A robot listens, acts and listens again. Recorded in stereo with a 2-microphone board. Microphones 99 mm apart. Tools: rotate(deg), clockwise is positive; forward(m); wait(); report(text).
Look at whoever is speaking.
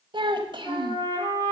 rotate(55)
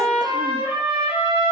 wait()
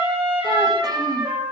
wait()
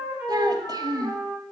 rotate(50)
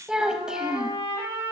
rotate(10)
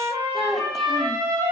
report("Facing the child speaking.")